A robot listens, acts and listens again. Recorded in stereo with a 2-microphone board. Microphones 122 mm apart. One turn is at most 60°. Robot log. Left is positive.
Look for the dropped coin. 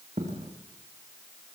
cmd yaw -60
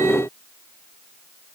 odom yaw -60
note: Nothing new. It was at 30° right.
cmd yaw -30
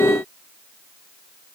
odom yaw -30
end: I heard a dropped coin from this way, but can't make it out now.